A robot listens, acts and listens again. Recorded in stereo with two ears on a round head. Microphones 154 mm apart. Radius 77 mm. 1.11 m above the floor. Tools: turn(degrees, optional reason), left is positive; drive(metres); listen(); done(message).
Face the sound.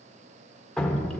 turn(degrees=30)
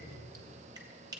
listen()
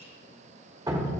turn(degrees=-25, reason="So it is at 25° right.")
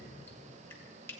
listen()
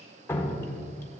turn(degrees=15, reason="The dripping is now 15° left.")
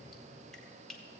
listen()
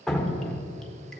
done("Facing the dripping.")